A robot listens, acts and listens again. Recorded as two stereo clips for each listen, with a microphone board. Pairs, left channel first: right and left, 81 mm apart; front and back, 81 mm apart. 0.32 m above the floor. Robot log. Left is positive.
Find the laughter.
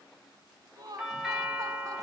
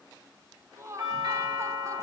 note: The laughter: 125° left.
cmd yaw +125
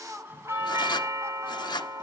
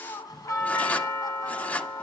note: The laughter is now 35° left.
cmd yaw +35
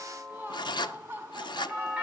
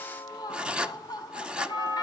note: The laughter is now 25° left.
cmd yaw +25
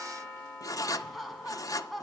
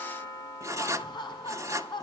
end: Found it: laughter, straight ahead.